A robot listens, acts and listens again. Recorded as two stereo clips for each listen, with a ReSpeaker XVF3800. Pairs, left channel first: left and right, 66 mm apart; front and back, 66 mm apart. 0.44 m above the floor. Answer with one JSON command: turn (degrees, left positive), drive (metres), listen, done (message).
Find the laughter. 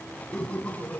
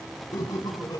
{"turn": 25}
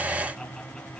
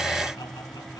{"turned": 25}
{"listen": true}
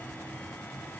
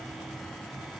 {"listen": true}
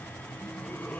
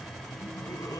{"turn": 30}
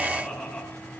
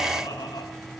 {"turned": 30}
{"turn": 15}
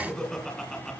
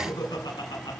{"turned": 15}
{"turn": 10}
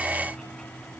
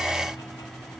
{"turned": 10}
{"listen": true}
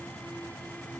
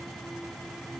{"listen": true}
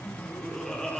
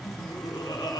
{"done": "Facing the laughter, over 4 m away."}